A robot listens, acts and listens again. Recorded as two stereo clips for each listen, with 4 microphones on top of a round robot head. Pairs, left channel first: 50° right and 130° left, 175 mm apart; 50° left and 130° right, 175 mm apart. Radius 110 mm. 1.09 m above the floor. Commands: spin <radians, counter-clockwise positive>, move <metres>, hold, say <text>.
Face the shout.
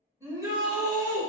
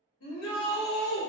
spin 0.96
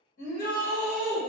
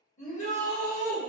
say Found it: a shout, straight ahead, 1 to 2 m away.